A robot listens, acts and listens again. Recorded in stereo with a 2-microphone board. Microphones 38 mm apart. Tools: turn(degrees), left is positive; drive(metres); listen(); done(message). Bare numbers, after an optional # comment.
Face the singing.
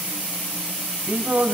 # The singing: about 65° right or 115° right.
turn(-65)
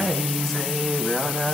# So it is at 10° left.
turn(10)
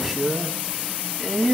done("Facing the singing.")